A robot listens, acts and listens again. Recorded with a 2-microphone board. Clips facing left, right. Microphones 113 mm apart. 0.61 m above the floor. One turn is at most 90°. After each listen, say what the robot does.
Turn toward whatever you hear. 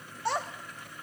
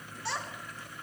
Turn 45° left.
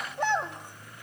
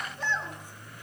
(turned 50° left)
Turn 75° left.
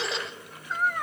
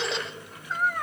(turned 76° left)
Found it: a child speaking, straight ahead, 1 to 2 m away.